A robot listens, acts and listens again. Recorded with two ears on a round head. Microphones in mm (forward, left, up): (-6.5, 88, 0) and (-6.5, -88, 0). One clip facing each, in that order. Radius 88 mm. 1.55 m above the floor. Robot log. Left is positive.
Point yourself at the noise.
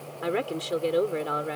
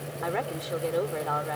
note: The woman speaking: about 40° left or 140° left.
cmd yaw +40
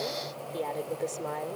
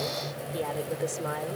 end: Found it: a woman speaking, straight ahead.